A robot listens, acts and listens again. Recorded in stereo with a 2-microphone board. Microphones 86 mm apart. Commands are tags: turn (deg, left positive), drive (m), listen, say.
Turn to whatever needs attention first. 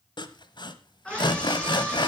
<turn deg="30"/>
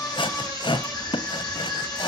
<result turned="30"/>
<turn deg="135"/>
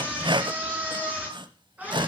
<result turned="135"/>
<turn deg="-15"/>
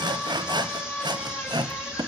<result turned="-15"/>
<turn deg="-10"/>
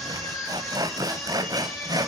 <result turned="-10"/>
<say>Facing the scream.</say>